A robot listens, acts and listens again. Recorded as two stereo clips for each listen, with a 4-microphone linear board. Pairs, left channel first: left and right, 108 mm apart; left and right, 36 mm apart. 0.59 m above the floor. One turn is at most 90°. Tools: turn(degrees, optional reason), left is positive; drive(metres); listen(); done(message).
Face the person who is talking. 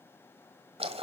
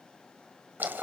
listen()
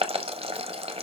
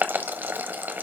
listen()
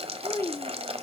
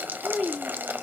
turn(degrees=20, reason="The child speaking: about 20° left or 160° left.")
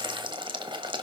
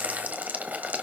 listen()
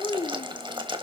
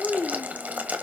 turn(degrees=90, reason="So it is at 140° left.")
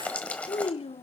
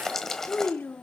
turn(degrees=75, reason="The child speaking is now 75° left.")
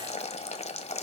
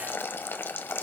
listen()
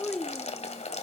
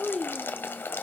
done("Found it: a child speaking, straight ahead, under 1 m away.")